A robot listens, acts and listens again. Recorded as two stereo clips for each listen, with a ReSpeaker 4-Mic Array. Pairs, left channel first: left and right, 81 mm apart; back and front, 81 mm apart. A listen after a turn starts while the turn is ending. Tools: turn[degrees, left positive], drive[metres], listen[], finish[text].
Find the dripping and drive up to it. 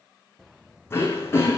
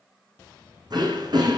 Action: listen[]
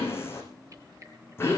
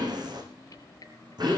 Thought: The dripping: 140° right.
Action: turn[-140]
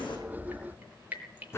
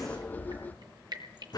Thought: The dripping is now 20° right.
Action: turn[-20]
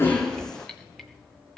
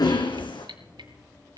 Action: drive[1.0]
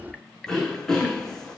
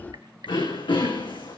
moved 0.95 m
Action: drive[1.0]
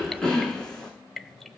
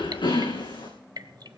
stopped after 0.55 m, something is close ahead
Action: finish[I am next to the dripping.]